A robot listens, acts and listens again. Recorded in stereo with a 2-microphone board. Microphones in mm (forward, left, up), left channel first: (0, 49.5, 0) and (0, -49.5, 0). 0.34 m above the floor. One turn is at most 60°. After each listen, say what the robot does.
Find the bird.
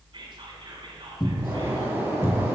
Turn 25° right.
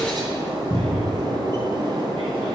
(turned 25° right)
Turn 60° right.
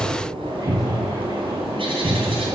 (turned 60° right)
Turn 60° right.
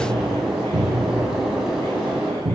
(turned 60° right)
Found it: a bird, straight ahead.